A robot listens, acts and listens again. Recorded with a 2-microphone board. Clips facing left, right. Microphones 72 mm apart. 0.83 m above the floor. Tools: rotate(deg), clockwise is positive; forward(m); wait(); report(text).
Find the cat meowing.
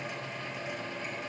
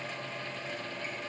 wait()
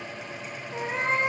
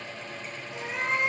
rotate(-35)
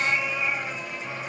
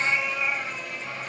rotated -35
report("Found it: a cat meowing, straight ahead.")